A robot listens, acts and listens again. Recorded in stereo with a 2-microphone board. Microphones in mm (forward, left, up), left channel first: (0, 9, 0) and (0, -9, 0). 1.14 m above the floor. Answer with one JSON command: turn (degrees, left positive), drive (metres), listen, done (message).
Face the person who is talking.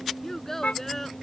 {"turn": 20}
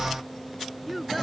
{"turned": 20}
{"done": "Facing the child speaking."}